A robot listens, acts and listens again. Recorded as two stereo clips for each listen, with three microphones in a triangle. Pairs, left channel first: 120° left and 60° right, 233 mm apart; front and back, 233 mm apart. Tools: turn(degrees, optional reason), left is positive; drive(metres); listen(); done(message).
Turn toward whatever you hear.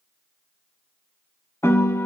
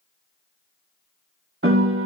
turn(degrees=-160, reason="The piano: 160° right.")
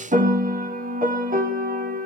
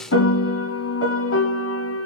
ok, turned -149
turn(degrees=-10, reason="The piano is now 10° right.")
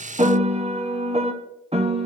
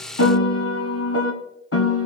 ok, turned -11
done("Found it: a piano, straight ahead.")